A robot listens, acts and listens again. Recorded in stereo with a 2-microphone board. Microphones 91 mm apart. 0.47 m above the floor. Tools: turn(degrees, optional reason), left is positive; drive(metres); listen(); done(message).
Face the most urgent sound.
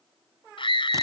turn(degrees=70, reason="The scream: about 70° left or 110° left.")
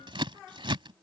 listen()
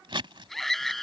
done("Found it: a scream, straight ahead.")